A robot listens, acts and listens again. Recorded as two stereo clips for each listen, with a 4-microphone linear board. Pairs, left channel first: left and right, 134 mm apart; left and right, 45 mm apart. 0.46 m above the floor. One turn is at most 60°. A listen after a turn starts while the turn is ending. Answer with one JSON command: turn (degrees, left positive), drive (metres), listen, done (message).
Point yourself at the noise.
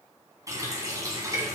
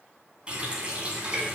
{"turn": -25}
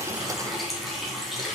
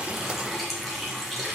{"done": "Found it: a running tap, straight ahead, 2 to 4 m away."}